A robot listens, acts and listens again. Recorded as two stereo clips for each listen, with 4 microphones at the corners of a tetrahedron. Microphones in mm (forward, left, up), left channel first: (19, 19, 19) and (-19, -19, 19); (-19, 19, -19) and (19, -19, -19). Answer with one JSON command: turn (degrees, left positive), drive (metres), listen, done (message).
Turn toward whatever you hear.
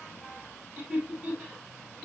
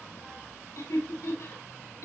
{"turn": 155}
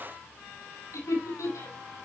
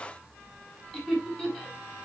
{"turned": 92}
{"turn": 55}
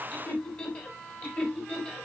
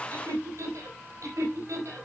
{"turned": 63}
{"turn": -20}
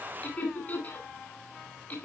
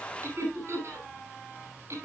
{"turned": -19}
{"turn": -10}
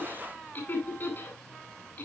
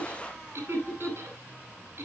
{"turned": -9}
{"done": "Found it: laughter, straight ahead, over 4 m away."}